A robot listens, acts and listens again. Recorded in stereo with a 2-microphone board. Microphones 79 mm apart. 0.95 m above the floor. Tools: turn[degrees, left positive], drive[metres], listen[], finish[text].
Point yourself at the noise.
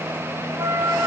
Thought: The flute: about 45° right or 135° right.
Action: turn[-45]
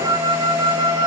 Thought: So it is at 85° right.
Action: turn[-85]
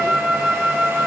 Action: finish[Found it: a flute, straight ahead.]